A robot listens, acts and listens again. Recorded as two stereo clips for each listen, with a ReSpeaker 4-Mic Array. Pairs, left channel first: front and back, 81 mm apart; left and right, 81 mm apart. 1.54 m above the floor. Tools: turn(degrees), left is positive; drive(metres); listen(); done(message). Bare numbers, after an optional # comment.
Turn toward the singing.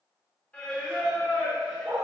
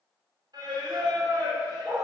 # The singing: 70° right.
turn(-70)
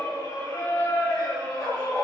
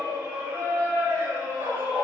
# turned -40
# The singing is now 30° right.
turn(-30)
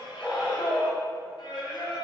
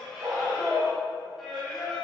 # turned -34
done("Facing the singing.")